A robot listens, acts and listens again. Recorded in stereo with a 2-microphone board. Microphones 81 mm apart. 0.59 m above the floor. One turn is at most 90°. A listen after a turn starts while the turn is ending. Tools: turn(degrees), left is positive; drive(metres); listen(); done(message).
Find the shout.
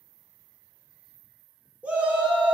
turn(degrees=-15)
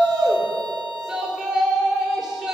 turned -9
turn(degrees=-30)
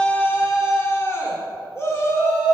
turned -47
turn(degrees=40)
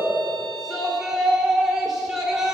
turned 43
done("Facing the shout.")